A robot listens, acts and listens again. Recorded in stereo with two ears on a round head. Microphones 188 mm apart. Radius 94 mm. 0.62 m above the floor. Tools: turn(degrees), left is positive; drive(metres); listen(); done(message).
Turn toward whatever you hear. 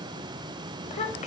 turn(degrees=35)
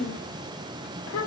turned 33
turn(degrees=105)
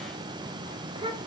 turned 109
turn(degrees=-25)
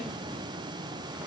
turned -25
listen()
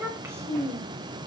turn(degrees=-15)
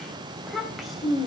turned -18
done("Found it: a child speaking, straight ahead, 2 to 4 m away.")